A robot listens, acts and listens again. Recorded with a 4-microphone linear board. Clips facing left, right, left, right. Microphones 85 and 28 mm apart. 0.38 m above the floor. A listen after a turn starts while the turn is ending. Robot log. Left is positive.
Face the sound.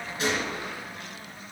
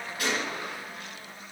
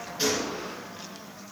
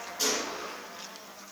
note: The gunshot: about 25° left or 155° left.
cmd yaw +25
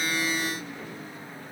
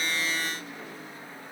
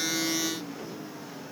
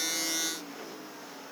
cmd idle
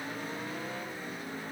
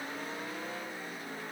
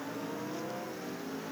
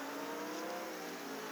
end: I heard a gunshot, but can't make it out now. It was about straight ahead or 130° left.